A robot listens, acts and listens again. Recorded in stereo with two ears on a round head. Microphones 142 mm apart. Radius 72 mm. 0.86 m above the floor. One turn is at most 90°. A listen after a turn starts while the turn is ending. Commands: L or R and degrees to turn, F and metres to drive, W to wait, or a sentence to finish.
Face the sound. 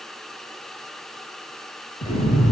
L45
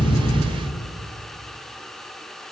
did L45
Facing the explosion, over 4 m away.